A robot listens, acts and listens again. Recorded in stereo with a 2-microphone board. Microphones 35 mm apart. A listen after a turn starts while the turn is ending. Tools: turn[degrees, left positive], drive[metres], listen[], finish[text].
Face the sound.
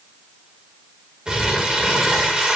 Thought: The crumpling: about 25° right or 155° right.
Action: turn[-25]
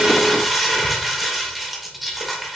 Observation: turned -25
Action: finish[Found it: crumpling, straight ahead, 1 to 2 m away.]